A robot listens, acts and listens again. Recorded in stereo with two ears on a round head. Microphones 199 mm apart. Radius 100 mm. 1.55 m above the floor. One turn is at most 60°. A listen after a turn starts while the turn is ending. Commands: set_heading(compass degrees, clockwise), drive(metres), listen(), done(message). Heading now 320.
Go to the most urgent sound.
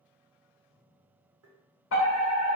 set_heading(260)
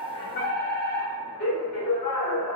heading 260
set_heading(215)
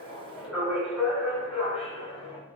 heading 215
drive(1.0)
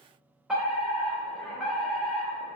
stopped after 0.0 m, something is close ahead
done("Blocked. The fire alarm is further on, straight ahead.")